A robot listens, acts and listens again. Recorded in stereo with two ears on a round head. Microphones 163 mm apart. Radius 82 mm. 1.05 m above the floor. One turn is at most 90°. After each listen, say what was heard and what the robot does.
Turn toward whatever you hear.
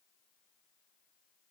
Keep listening.
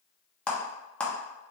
Turn 30° left.
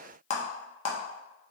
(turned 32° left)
So it is at 140° left. Turn 90° left.
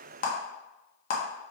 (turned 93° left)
The clap is now 50° left. Turn 50° left.
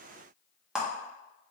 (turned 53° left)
Found it: a clap, straight ahead, 1 to 2 m away.